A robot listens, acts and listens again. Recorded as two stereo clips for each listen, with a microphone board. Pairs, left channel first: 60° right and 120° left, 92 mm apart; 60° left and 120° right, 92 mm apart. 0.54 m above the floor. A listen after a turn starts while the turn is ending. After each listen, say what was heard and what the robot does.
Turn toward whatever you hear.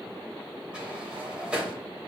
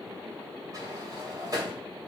The sliding door: 165° right. Turn 165° right.
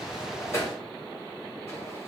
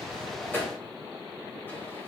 Found it: a sliding door, straight ahead, 2 to 4 m away.